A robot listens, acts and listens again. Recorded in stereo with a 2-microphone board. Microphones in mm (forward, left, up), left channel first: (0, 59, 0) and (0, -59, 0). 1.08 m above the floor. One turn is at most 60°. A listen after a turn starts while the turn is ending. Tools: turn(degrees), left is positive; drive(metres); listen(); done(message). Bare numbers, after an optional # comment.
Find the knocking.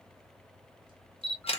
listen()
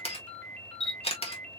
listen()
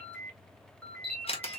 done("I can't make out knocking, only a ringtone and a camera shutter.")